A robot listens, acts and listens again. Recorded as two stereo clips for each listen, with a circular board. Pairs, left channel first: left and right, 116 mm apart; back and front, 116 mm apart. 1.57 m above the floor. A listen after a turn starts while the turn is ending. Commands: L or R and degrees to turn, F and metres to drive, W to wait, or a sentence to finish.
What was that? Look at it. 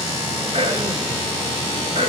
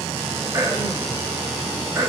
R65
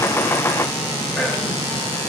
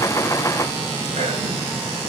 W
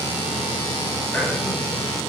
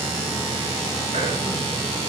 W
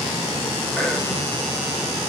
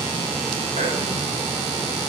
Found it: throat clearing, straight ahead, 2 to 4 m away.